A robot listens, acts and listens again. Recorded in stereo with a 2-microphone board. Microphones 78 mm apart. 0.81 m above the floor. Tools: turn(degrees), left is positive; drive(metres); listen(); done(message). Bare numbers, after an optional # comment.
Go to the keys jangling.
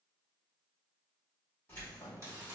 # The keys jangling: about 25° left or 155° left.
turn(25)
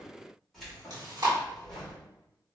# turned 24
drive(1.0)
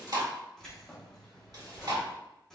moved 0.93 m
drive(1.0)
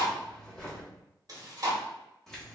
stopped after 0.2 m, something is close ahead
done("Arrived at the keys jangling, straight ahead.")